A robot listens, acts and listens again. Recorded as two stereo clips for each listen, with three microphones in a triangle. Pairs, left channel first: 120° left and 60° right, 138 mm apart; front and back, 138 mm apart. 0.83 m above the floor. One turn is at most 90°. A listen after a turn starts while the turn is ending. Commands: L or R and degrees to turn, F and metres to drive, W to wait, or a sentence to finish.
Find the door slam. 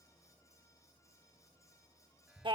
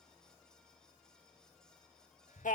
W
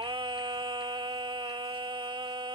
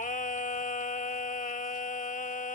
W
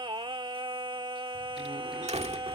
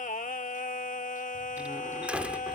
R90
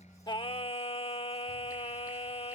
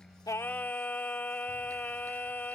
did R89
R10
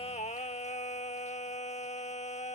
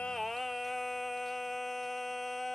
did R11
I heard a door slam from this way, but can't make it out now.